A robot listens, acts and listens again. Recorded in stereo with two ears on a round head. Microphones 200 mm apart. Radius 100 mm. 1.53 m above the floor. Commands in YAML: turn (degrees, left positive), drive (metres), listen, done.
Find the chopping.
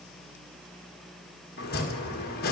turn: 45
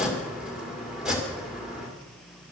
done: "Facing the chopping, 2 to 4 m away."